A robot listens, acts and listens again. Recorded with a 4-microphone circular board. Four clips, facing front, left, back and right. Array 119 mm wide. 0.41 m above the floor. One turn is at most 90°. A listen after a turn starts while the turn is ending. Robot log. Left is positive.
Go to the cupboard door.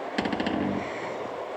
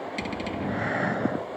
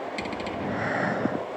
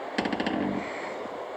note: The cupboard door: 45° right.
cmd yaw -45
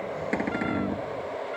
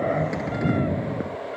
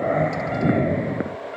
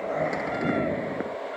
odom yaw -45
cmd idle
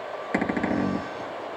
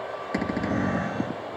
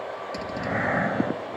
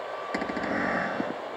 cmd fwd 1.0
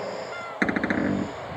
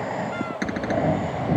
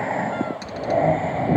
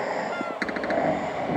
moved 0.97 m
cmd fwd 1.0
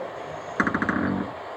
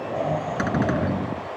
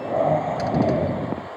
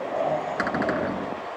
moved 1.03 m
cmd idle
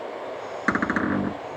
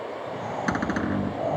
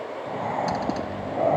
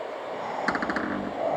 cmd fwd 1.0
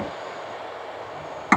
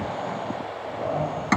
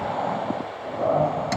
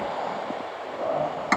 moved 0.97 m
cmd fwd 1.0
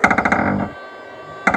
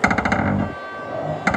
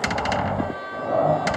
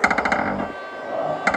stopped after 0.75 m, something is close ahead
end: I am next to the cupboard door.